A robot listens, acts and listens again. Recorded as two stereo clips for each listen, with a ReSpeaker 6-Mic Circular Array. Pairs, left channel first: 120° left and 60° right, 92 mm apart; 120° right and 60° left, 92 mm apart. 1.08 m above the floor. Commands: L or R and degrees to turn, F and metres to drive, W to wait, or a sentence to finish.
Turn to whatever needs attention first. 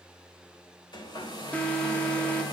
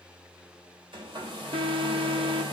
L45
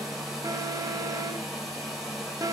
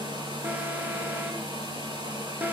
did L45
R10
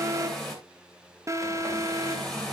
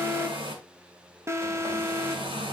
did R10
Facing the alarm.